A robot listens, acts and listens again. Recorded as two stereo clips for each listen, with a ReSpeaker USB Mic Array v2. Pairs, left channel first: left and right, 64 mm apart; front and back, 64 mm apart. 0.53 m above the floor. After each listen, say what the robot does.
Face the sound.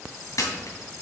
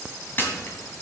Turn 60° left.
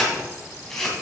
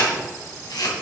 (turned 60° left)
Facing the camera shutter, 2 to 4 m away.